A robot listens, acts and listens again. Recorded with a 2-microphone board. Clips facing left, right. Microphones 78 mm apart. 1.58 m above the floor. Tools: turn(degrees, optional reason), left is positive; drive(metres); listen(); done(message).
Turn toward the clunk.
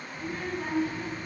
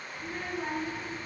listen()
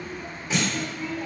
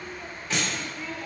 turn(degrees=-55, reason="The clunk: about 55° right or 125° right.")
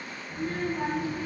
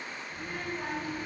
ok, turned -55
listen()
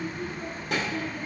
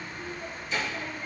done("I heard a clunk, but can't make it out now. It was about straight ahead or 70° right.")